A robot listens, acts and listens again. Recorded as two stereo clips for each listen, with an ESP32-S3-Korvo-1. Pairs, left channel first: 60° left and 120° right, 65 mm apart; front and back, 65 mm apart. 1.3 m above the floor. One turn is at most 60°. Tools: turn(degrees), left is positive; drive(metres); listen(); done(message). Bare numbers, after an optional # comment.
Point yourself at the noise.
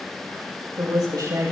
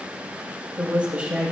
# The woman speaking: 110° right.
turn(-60)
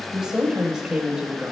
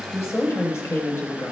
# The woman speaking is now 45° right.
turn(-45)
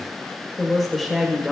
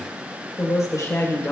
# The woman speaking is now 30° right.
turn(-30)
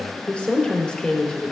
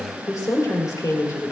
# The woman speaking is now 20° right.
turn(-20)
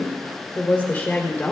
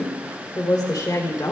done("Found it: a woman speaking, straight ahead.")